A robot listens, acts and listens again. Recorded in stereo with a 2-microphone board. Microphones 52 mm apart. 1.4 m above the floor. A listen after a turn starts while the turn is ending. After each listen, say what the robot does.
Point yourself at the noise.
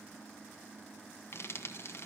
Turn 55° left.
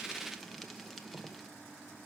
Found it: frying, straight ahead, 1 to 2 m away.